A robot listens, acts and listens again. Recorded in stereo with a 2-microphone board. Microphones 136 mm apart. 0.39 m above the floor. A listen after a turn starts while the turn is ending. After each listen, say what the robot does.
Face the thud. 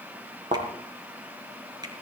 Turn 60° right.
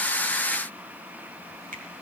Keep listening.
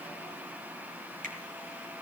I heard a thud, but can't make it out now. It was about straight ahead or 60° right.